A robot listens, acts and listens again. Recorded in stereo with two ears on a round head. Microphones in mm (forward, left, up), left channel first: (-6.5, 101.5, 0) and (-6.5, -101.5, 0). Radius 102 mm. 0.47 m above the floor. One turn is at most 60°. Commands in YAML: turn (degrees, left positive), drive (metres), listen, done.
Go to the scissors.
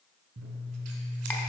turn: -60
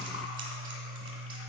turn: -35
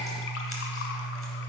drive: 1.0
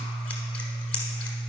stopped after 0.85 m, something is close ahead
turn: 10
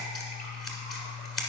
done: "Arrived at the scissors, straight ahead."